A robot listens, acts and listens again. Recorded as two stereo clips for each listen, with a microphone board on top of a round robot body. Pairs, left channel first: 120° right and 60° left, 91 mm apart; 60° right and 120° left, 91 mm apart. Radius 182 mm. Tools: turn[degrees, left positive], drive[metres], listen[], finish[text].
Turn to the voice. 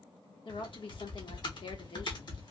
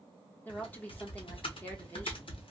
Thought: The woman speaking: 130° right.
Action: turn[-130]
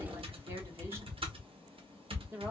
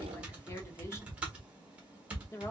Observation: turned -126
Action: finish[Facing the woman speaking, 1 to 2 m away.]